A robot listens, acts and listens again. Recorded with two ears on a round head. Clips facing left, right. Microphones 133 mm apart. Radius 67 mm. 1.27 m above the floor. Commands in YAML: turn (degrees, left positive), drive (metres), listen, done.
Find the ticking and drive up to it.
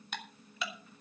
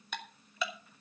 turn: -75
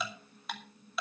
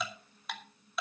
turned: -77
drive: 1.0
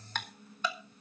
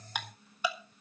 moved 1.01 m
turn: -10
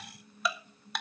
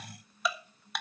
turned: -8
drive: 1.0
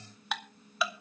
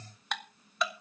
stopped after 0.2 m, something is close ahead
done: "I am next to the ticking."